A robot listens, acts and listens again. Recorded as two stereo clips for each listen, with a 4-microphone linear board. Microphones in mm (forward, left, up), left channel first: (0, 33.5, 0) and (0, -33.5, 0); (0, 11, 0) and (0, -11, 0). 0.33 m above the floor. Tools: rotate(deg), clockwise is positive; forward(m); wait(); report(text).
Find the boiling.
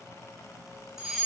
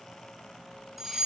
wait()
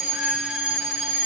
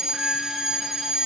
wait()
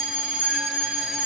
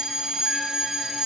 report("I can't make out boiling, only a fire alarm.")